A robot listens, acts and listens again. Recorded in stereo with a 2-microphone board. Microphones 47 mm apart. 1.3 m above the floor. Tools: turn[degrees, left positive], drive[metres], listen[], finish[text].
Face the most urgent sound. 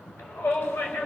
Thought: The shout: about 65° left or 115° left.
Action: turn[65]
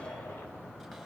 Thought: So it is at 50° left.
Action: turn[50]
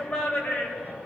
Thought: The shout is now 20° left.
Action: turn[20]
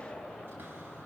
Action: finish[Facing the shout, over 4 m away.]